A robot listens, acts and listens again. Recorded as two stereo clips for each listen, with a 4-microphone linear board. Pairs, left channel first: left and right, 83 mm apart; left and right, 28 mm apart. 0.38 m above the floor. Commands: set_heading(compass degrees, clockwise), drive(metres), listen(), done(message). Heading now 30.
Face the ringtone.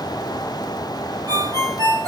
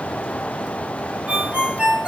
set_heading(80)
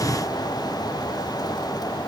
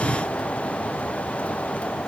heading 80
listen()
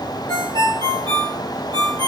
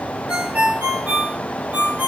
set_heading(155)
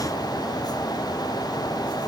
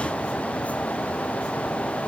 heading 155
listen()
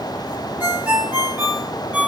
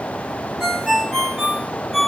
set_heading(175)
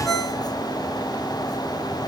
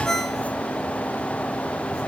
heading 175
done("Facing the ringtone, 2 to 4 m away.")